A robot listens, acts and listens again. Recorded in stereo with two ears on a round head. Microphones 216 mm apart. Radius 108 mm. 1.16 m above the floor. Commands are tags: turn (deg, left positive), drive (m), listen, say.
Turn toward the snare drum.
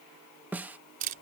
<turn deg="-30"/>
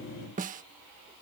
<turn deg="-140"/>
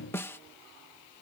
<turn deg="10"/>
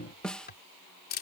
<say>Found it: a snare drum, straight ahead.</say>